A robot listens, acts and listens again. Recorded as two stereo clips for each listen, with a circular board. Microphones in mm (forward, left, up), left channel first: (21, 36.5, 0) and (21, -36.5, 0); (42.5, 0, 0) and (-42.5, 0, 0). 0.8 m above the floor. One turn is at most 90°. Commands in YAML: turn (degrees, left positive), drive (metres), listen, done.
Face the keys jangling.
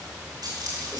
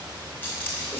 turn: -65
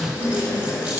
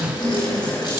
listen: true
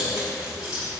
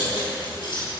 turn: -15
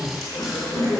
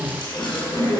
listen: true
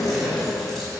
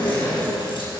listen: true
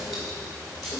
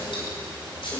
done: "I heard keys jangling from this way, but can't make it out now."